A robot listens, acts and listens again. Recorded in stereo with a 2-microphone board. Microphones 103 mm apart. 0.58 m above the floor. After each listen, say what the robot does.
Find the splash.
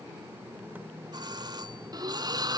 Turn 40° right.
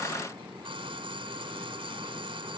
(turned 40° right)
Keep listening.
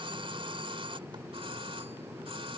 I heard a splash, but can't make it out now. It was about straight ahead or 100° right.